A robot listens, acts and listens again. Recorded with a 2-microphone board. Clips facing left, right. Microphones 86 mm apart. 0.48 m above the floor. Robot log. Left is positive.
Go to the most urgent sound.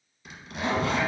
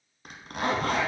cmd idle
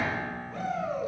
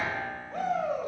note: The shout: about 50° right or 130° right.
cmd yaw -50
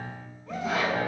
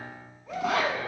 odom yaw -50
cmd fwd 1.0
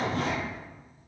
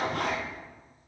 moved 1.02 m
cmd idle
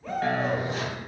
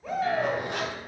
cmd fwd 1.0
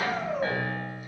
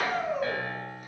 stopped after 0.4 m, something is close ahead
end: I am next to the shout.